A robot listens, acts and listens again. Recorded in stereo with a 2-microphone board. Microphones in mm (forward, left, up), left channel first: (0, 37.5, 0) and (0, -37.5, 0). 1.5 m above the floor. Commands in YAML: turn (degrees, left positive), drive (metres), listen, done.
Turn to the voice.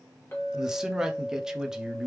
turn: -30
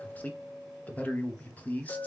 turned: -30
turn: 20
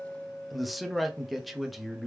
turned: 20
done: "Found it: a man speaking, straight ahead."